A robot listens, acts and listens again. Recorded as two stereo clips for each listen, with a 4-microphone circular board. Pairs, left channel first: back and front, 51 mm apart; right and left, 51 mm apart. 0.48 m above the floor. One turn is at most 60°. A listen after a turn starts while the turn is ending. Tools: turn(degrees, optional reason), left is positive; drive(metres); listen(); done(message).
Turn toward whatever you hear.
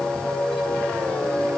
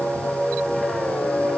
listen()
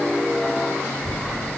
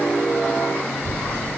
turn(degrees=60, reason="The child speaking: 175° left.")
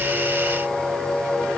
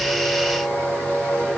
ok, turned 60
turn(degrees=60, reason="Nothing new. It was at 115° left.")
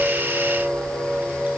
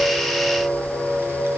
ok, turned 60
turn(degrees=55, reason="Nothing new. It was at 55° left.")
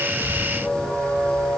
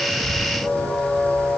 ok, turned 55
done("Facing where the child speaking came from. I can't hear it now.")